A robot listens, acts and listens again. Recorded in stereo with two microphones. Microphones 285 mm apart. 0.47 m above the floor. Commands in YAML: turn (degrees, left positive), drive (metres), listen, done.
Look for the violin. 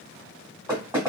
listen: true
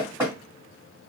listen: true
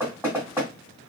done: "I can't make out a violin, only knocking."